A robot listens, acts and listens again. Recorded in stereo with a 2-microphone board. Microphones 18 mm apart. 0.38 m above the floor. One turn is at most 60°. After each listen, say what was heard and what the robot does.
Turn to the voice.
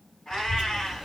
The child speaking: about 55° right or 125° right. Turn 55° right.
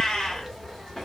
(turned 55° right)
Facing the child speaking, under 1 m away.